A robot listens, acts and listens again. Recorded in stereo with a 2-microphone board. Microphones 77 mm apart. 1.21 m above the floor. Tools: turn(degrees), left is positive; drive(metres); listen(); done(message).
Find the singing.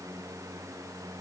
listen()
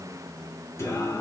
turn(degrees=35)
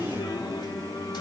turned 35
turn(degrees=105)
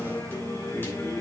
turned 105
turn(degrees=30)
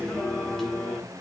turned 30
done("Found it: singing, straight ahead.")